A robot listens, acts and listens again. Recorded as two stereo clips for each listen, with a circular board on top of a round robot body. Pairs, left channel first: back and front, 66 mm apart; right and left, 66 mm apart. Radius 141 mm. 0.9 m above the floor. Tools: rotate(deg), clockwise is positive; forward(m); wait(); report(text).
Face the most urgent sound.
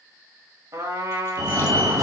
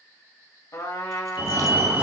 rotate(-30)
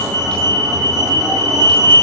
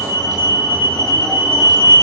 report("Facing the fire alarm.")